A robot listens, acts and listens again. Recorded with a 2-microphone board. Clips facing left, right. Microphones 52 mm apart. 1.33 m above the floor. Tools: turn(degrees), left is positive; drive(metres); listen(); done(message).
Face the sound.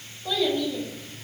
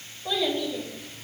turn(degrees=-30)
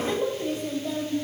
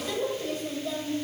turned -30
turn(degrees=25)
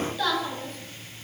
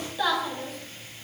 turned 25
turn(degrees=-10)
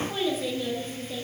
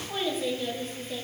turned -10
done("Facing the child speaking.")